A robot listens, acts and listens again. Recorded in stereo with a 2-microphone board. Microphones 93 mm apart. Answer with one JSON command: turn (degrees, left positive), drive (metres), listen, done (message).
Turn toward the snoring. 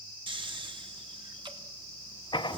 {"turn": -55}
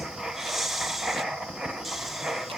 {"done": "Facing the snoring, under 1 m away."}